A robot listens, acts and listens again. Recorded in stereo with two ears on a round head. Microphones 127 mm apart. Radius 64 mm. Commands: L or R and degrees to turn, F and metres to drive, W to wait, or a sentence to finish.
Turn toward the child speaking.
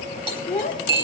L45
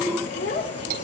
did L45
L90
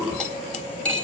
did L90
W
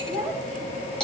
Found it: a child speaking, straight ahead.